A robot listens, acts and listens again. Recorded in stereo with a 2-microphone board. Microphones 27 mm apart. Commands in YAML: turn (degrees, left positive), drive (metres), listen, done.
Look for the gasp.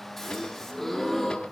turn: 15
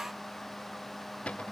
listen: true
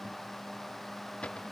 done: "I heard a gasp, but can't make it out now. It was about straight ahead or 150° left."